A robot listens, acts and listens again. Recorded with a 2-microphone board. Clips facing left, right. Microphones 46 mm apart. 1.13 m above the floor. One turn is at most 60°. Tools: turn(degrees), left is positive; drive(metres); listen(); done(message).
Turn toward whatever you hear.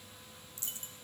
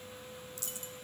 turn(degrees=35)
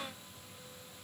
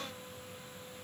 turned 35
listen()
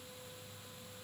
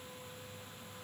done("I heard a dropped coin, but can't make it out now. It was about straight ahead or 110° left.")